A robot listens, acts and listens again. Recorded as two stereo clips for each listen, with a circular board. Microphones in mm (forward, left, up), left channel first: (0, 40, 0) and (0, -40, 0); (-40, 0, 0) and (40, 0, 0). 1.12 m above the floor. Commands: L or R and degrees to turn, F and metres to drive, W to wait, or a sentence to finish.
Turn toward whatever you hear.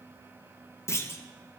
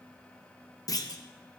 L145
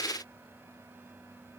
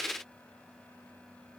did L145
Facing where the clunk came from. I can't hear it now.